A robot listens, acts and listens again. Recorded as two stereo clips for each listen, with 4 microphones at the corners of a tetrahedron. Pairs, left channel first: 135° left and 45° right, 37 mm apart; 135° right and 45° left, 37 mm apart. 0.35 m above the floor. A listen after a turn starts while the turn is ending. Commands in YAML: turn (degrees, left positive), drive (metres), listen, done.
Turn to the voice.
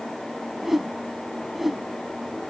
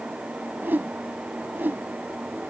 listen: true
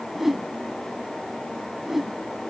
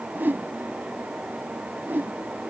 listen: true
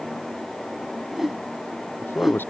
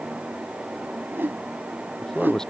turn: 150
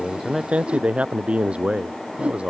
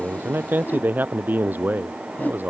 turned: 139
turn: 10
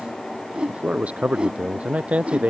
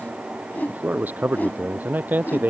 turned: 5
turn: 10
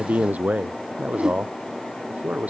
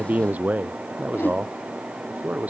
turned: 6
done: "Facing the man speaking."